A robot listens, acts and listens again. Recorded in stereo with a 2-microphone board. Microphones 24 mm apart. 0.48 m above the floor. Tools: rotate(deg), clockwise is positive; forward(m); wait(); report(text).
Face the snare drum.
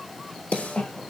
rotate(-90)
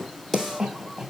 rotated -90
rotate(-10)
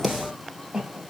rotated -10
wait()
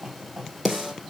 report("Found it: a snare drum, straight ahead, 2 to 4 m away.")